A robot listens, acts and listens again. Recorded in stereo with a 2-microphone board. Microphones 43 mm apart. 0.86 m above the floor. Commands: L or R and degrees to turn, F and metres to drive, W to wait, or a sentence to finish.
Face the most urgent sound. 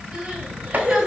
R15
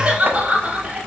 R155
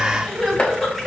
Facing the crying, 1 to 2 m away.